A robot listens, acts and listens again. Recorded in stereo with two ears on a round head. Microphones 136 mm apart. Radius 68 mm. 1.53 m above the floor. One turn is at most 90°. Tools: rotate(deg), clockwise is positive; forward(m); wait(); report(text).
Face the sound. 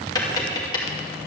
rotate(-25)
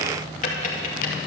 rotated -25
rotate(-90)
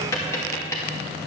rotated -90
rotate(-20)
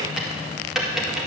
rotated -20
report("Facing the tapping.")